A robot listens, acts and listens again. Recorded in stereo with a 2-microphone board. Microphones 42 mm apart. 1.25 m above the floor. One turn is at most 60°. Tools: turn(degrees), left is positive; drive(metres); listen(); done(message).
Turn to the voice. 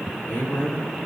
turn(degrees=60)
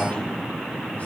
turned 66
turn(degrees=35)
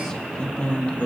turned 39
turn(degrees=40)
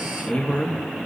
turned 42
turn(degrees=45)
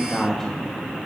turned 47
turn(degrees=10)
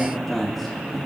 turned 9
done("Found it: a man speaking, straight ahead.")